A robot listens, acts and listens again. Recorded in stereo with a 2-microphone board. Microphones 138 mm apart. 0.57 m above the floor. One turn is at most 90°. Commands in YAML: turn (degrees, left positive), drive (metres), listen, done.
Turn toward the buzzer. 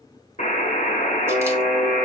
turn: 65
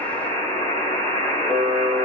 turn: 25
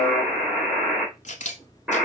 done: "Found it: a buzzer, straight ahead, 2 to 4 m away."